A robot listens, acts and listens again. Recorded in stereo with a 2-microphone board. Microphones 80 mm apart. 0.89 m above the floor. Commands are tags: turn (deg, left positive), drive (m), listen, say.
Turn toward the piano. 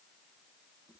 <listen/>
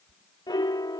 <turn deg="60"/>
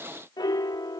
<turn deg="60"/>
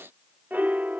<turn deg="-25"/>
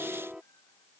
<turn deg="-10"/>
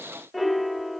<say>Facing the piano.</say>